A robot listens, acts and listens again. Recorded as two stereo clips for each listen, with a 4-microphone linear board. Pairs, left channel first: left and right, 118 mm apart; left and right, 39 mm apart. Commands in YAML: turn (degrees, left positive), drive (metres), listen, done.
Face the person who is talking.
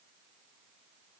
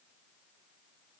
listen: true
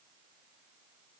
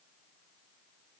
listen: true
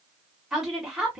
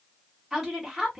turn: -30
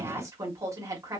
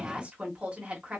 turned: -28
turn: -150
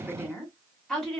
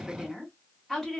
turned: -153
done: "Found it: a woman speaking, straight ahead."